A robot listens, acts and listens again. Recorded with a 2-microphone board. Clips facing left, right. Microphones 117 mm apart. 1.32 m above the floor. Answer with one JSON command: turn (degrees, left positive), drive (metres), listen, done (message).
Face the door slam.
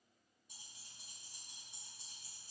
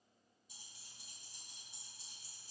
{"listen": true}
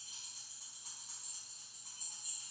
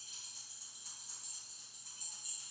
{"listen": true}
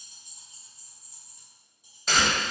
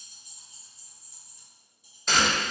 {"turn": 30}
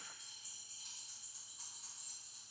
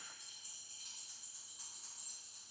{"listen": true}
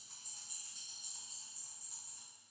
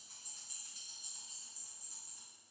{"done": "I heard a door slam, but can't make it out now. It was about 30° right or 150° left."}